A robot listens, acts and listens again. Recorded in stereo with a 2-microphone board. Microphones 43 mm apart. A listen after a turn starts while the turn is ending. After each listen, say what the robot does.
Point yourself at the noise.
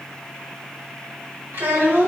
Turn 55° right.
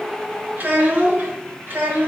Turn 55° right.
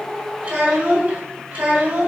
Turn 40° right.
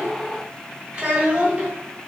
Turn 15° right.
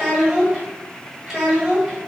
Facing the child speaking.